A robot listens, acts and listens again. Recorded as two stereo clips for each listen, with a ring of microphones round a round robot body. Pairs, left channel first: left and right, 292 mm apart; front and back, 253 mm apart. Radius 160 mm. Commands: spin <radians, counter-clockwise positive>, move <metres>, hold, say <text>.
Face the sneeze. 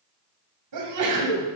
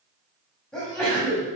spin -1.57
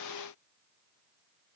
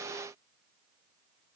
say Facing where the sneeze came from. I can't hear it now.